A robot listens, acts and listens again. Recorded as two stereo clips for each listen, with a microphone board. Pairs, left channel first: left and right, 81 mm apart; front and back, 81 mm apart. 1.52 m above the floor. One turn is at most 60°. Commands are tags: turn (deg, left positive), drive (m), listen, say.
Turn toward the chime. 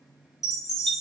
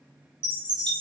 <turn deg="60"/>
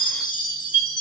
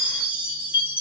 <turn deg="60"/>
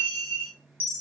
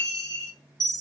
<turn deg="30"/>
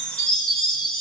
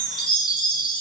<turn deg="10"/>
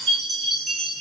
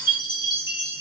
<say>Facing the chime, under 1 m away.</say>